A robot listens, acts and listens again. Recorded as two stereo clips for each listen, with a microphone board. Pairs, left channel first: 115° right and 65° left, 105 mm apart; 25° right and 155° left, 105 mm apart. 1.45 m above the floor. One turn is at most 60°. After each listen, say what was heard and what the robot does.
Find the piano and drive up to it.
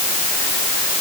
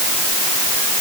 Keep listening.
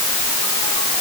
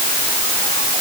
Keep listening.
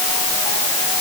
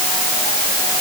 I can't make out a piano.